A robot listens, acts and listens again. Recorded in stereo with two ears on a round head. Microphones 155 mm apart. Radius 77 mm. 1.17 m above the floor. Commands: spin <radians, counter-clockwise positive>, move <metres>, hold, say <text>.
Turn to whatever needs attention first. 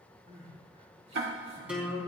spin -0.70
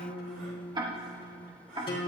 hold
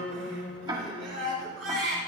spin -1.83
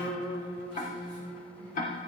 hold
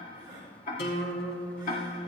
spin -0.52
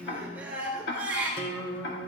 spin -0.17
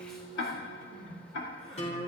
say Found it: crying, straight ahead.